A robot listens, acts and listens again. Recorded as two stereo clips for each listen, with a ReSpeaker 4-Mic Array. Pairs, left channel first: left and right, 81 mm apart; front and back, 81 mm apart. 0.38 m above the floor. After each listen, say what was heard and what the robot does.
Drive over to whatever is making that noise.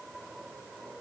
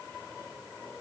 Keep listening.
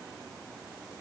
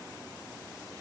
Keep listening.
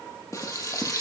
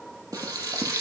The frying: 140° left. Turn 140° left.
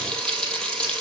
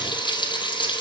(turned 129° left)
The frying is now 10° left. Turn 10° left.
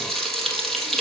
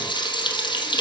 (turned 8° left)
Drive 1.0 m forward.
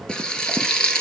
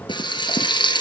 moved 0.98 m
The frying is now 10° left. Turn 10° left.
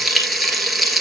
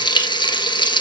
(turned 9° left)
Drive 1.0 m forward.
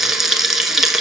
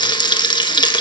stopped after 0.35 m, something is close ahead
I am next to the frying.